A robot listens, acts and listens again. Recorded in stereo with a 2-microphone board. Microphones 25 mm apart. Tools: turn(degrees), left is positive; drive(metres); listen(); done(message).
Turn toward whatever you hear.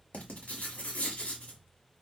turn(degrees=70)
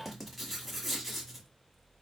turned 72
done("Facing the writing.")